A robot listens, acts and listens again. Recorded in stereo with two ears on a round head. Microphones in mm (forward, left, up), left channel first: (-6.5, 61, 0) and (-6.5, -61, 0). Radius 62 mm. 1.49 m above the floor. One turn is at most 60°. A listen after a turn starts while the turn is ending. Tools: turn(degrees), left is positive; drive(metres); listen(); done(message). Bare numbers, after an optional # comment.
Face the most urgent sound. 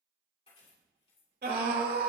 turn(-60)
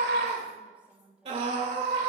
# So it is at 45° right.
turn(-45)
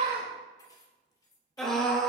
done("Facing the scream.")